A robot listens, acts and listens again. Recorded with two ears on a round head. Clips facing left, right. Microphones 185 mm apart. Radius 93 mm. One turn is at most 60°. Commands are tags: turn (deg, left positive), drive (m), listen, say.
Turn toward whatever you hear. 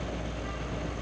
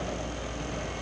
<listen/>
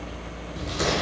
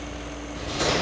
<turn deg="50"/>
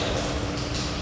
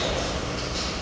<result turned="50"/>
<turn deg="60"/>
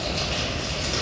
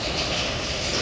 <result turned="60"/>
<turn deg="15"/>
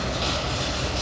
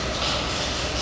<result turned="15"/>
<say>Found it: crumpling, straight ahead.</say>